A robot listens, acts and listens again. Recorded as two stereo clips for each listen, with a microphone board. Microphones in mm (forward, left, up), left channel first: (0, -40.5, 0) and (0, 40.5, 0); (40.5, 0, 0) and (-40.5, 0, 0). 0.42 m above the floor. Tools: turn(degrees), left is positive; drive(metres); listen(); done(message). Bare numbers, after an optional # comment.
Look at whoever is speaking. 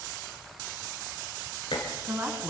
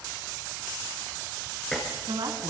# The woman speaking: 155° left.
turn(155)
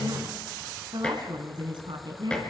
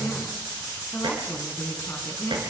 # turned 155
# The woman speaking is now 65° left.
turn(65)
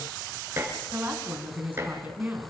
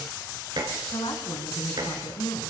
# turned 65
# The woman speaking is now 20° left.
turn(20)
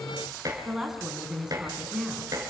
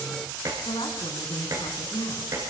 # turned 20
done("Facing the woman speaking, over 4 m away.")